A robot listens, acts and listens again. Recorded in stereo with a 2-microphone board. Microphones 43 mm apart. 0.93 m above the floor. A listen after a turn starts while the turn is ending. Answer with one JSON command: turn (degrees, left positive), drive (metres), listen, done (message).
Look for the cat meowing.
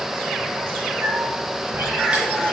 {"turn": -70}
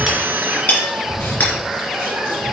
{"turn": -30}
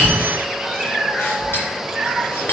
{"turn": -10}
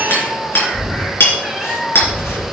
{"done": "Facing the cat meowing."}